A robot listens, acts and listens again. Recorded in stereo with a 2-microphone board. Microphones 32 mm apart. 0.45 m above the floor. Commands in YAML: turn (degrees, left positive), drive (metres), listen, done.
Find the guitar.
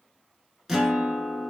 turn: -30
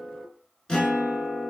turn: 25
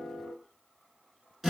done: "Facing the guitar."